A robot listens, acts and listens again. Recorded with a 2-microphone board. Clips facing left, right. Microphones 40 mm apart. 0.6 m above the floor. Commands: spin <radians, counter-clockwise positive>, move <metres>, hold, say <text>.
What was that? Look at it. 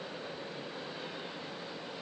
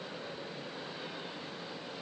hold
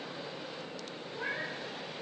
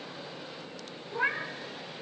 spin -1.05
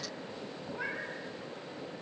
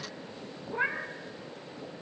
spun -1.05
spin -0.87
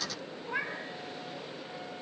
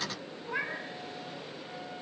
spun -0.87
say Facing the cat meowing.